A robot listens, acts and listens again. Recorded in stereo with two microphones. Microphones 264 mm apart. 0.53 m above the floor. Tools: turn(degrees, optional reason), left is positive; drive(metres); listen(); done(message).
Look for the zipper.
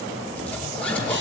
turn(degrees=30)
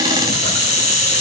listen()
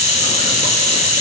listen()
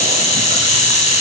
done("I heard a zipper, but can't make it out now. It was about 25° right or 145° left.")